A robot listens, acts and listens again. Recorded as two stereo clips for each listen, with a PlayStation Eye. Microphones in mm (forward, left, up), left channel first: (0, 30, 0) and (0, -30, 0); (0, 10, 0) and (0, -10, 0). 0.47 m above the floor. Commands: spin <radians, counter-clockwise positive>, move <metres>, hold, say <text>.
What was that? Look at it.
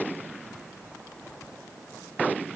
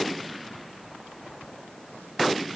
hold
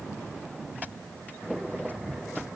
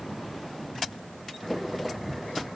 hold
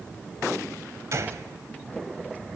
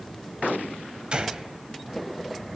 spin -0.87
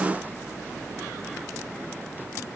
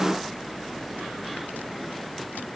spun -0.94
hold
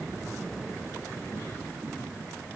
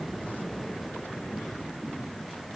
say I heard a gunshot, but can't make it out now. It was about straight ahead or 75° right.